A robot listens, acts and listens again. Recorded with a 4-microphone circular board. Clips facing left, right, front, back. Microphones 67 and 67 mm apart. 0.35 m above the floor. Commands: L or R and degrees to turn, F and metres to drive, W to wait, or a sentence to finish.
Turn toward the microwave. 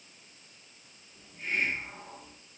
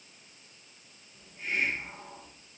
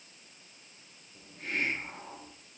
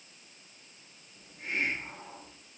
W
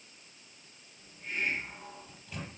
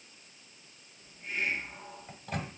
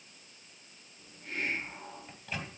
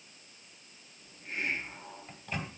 R90
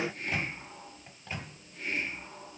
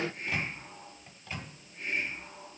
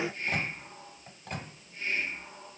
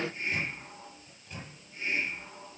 L20
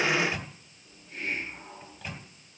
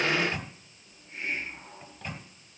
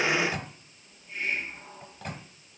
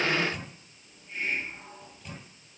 Found it: a microwave, straight ahead, 1 to 2 m away.